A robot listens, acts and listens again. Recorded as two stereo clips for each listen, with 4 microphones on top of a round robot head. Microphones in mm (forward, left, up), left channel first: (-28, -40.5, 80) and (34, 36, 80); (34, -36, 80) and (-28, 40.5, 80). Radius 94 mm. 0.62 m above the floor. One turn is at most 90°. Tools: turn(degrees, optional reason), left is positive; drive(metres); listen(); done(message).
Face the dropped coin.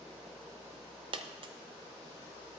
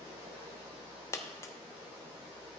turn(degrees=10, reason="The dropped coin: 10° left.")
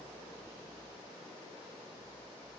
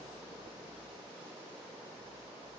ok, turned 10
done("Facing where the dropped coin came from. I can't hear it now.")